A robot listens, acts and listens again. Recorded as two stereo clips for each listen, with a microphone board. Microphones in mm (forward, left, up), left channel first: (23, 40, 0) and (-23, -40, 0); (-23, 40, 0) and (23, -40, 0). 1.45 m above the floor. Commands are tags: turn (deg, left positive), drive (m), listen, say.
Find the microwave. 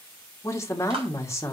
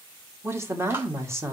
<listen/>
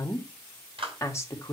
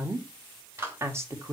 <listen/>
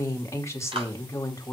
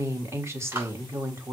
<say>I can't make out a microwave to turn to.</say>